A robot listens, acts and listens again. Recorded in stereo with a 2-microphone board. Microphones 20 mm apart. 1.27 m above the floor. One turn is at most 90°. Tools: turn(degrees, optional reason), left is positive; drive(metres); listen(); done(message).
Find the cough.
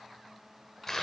listen()
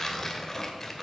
listen()
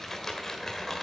done("I can't make out a cough, only tearing paper.")